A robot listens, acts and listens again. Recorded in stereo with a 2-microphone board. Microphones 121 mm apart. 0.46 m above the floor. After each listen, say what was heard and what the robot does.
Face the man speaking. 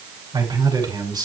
The man speaking: about 35° right or 145° right. Turn 35° right.
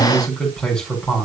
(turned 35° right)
So it is at 10° left. Turn 10° left.
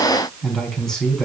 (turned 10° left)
Found it: a man speaking, straight ahead.